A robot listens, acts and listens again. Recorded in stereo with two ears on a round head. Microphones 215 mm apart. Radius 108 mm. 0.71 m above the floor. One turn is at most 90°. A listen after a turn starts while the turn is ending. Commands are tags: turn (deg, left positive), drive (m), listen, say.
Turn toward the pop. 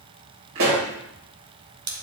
<turn deg="-55"/>
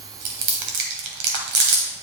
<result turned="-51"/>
<listen/>
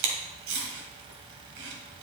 <say>I heard a pop, but can't make it out now. It was about 5° right or 75° right.</say>